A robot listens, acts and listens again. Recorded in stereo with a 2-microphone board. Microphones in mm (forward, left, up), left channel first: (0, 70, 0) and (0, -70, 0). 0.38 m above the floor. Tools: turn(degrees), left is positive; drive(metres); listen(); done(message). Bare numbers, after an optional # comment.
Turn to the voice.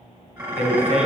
# The man speaking: about 55° right or 125° right.
turn(-55)
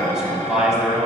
done("Found it: a man speaking, straight ahead.")